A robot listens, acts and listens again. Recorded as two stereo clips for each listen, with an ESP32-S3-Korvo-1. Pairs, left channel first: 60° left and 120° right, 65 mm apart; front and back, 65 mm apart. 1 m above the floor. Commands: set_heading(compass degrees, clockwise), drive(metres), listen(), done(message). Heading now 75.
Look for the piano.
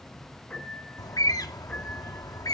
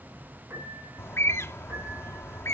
set_heading(300)
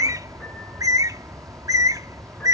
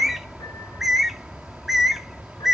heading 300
listen()
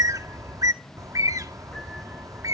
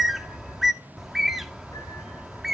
listen()
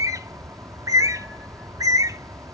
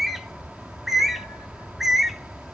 done("I heard a piano from this way, but can't make it out now.")